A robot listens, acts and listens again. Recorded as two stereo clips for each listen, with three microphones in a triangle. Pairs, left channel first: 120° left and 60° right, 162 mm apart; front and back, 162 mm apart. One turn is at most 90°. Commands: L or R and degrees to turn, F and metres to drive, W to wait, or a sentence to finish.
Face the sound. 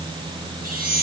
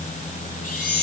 R35
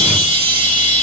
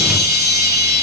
Found it: a chime, straight ahead, 2 to 4 m away.